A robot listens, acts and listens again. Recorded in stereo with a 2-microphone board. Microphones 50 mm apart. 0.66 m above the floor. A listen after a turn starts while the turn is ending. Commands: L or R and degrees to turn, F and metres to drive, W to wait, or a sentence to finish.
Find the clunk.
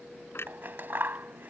L55
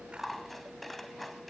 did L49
W
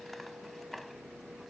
I heard a clunk, but can't make it out now. It was about 5° left or 75° left.